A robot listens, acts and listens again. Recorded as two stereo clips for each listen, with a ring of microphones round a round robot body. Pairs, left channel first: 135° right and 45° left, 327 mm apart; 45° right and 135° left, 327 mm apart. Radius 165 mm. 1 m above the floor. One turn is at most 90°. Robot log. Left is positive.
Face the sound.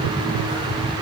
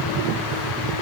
cmd idle
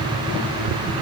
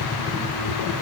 cmd idle
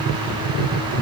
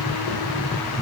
end: I can't make out anything.